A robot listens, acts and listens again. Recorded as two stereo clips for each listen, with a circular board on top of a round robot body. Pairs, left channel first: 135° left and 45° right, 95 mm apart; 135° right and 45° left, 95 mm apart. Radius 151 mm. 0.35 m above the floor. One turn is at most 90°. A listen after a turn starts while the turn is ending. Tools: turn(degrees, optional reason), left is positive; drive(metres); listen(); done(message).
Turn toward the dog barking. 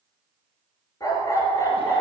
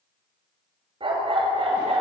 turn(degrees=75, reason="The dog barking: 75° left.")
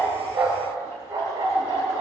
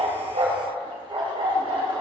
turn(degrees=10, reason="The dog barking is now 10° left.")
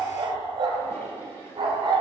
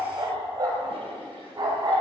done("Facing the dog barking.")